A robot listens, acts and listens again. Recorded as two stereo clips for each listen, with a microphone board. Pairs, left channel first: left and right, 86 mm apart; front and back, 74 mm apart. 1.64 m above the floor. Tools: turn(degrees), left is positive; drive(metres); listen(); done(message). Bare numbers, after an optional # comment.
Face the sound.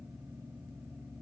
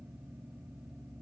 listen()
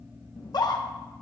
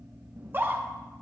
# The scream: 120° left.
turn(120)
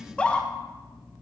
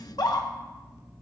# The scream is now 15° left.
turn(15)
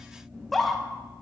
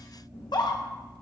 done("Facing the scream.")